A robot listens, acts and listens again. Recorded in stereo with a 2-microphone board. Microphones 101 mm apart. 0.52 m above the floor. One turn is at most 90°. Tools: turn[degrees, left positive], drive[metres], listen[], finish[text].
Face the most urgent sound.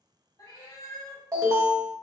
Thought: The alarm: about 30° right or 150° right.
Action: turn[-30]
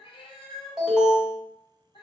Thought: So it is at 10° right.
Action: turn[-10]
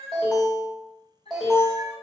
Action: finish[Facing the alarm.]